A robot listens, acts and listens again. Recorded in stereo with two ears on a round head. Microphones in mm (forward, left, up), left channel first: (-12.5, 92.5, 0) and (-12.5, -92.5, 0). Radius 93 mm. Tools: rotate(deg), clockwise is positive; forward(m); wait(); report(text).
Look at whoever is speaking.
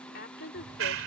rotate(-50)
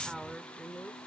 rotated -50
report("Facing the woman speaking.")